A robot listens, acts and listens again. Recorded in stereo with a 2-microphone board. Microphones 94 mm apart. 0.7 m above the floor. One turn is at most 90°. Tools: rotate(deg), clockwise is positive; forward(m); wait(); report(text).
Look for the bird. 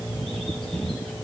wait()
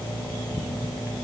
wait()
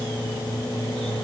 report("I can't make out a bird to turn to.")